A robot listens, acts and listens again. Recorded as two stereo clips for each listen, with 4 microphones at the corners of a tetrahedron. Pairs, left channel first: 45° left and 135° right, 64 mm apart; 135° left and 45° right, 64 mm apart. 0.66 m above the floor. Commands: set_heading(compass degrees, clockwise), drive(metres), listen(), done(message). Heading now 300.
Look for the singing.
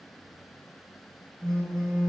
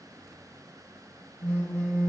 listen()
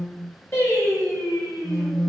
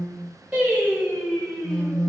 set_heading(260)
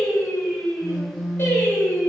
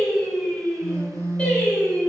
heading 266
set_heading(181)
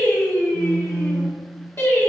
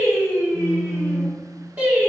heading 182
set_heading(172)
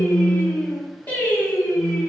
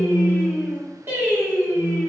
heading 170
done("Facing the singing.")